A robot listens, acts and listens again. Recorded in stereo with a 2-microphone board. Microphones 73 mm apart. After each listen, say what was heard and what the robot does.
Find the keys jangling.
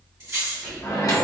The keys jangling: about 35° right or 145° right. Turn 35° right.
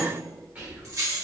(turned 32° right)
The keys jangling: about 40° right or 140° right. Turn 40° right.
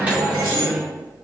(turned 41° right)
Keep listening.
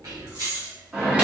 So it is at 125° right. Turn 125° right.
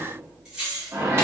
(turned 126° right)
The keys jangling is now 15° right. Turn 15° right.
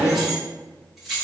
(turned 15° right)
Found it: keys jangling, straight ahead.